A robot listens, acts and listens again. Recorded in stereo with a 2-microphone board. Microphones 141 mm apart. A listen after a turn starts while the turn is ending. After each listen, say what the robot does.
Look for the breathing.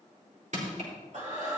Turn 65° right.
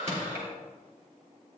Keep listening.
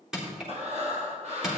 Turn 50° right.
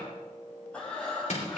Turn 10° left.
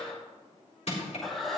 Found it: breathing, straight ahead, 2 to 4 m away.